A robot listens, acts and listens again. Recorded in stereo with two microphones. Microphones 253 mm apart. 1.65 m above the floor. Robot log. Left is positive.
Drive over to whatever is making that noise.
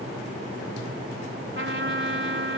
note: The trumpet: about 50° right or 130° right.
cmd yaw -50
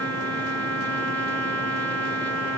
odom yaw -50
note: So it is at 80° right.
cmd yaw -80
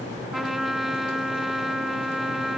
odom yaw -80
cmd fwd 1.0
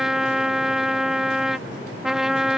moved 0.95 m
cmd fwd 1.0
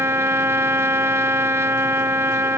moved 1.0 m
note: The trumpet is now 10° right.
cmd yaw -10
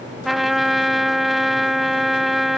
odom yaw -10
cmd fwd 1.0
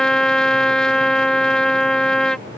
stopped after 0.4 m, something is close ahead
end: I am next to the trumpet.